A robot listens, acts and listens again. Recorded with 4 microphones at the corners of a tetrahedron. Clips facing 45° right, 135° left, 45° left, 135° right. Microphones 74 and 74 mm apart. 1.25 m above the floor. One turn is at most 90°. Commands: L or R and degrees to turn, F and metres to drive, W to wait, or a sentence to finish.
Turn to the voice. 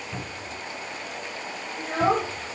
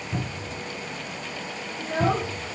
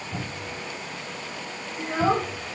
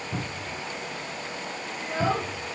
R15
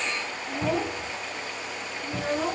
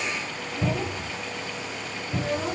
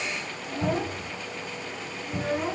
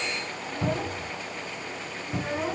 R50
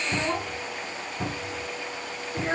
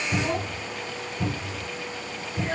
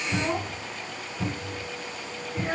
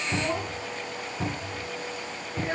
R20
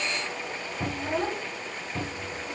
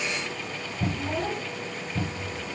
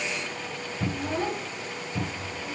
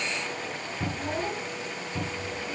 Facing the child speaking, 2 to 4 m away.